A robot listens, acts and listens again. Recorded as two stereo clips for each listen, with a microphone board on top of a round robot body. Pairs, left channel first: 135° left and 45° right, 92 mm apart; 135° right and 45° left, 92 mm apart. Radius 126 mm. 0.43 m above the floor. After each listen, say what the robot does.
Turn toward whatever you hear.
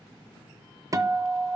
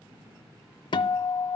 Turn 100° right.
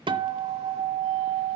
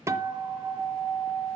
Turn 15° right.
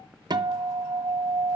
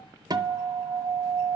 Facing the guitar.